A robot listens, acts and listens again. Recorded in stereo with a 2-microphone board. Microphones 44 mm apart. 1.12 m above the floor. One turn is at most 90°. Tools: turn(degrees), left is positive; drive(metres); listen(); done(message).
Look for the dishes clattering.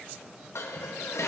turn(degrees=90)
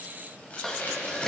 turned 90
turn(degrees=10)
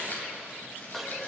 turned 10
done("Found it: dishes clattering, straight ahead.")